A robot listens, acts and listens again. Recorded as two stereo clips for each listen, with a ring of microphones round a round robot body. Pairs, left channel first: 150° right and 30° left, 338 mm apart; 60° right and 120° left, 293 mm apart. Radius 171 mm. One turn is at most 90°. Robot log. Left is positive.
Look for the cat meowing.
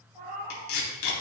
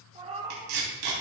note: The cat meowing: 50° left.
cmd yaw +50
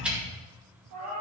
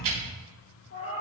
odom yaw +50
note: The cat meowing is now 20° right.
cmd yaw -20
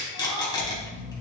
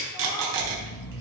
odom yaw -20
cmd idle
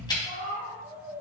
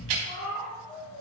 note: The cat meowing is now 20° right.
cmd yaw -20
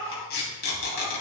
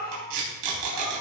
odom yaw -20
note: The cat meowing is now 10° right.
cmd yaw -10
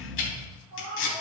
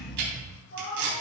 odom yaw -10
note: The cat meowing is now 10° right.
cmd yaw -10
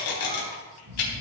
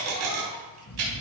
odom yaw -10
cmd idle
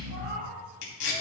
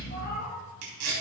end: Facing the cat meowing.